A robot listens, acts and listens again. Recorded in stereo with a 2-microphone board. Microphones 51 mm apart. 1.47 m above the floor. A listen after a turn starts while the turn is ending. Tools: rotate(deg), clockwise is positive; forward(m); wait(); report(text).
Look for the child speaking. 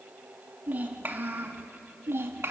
rotate(60)
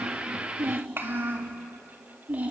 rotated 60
rotate(30)
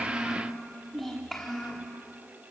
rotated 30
rotate(-10)
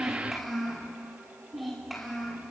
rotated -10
report("Facing the child speaking.")